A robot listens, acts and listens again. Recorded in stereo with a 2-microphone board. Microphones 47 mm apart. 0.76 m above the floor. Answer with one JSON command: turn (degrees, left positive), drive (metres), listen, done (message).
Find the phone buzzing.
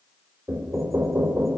{"listen": true}
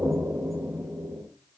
{"listen": true}
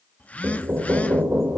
{"turn": 30}
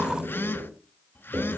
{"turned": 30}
{"turn": 115}
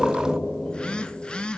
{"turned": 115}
{"turn": 25}
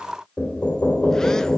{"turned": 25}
{"listen": true}
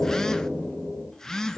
{"turn": 15}
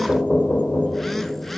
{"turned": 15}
{"listen": true}
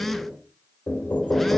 {"done": "Facing the phone buzzing."}